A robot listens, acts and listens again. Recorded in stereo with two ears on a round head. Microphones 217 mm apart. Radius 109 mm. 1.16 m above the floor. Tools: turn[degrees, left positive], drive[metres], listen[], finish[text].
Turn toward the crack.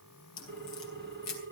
Action: turn[90]
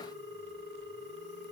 Action: finish[Facing where the crack came from. I can't hear it now.]